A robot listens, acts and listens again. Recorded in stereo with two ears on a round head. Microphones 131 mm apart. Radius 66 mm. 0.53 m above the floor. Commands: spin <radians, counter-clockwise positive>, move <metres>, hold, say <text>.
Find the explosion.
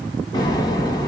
spin 0.52
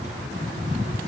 hold
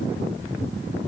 say I heard an explosion, but can't make it out now. It was about straight ahead or 120° left.